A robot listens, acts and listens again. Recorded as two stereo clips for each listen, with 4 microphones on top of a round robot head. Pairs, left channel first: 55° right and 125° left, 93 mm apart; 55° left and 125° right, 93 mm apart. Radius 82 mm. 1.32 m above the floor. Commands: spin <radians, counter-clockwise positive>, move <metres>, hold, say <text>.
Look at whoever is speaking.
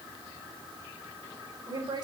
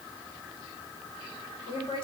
spin 1.48
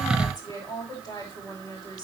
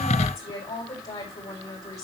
say Found it: a woman speaking, straight ahead.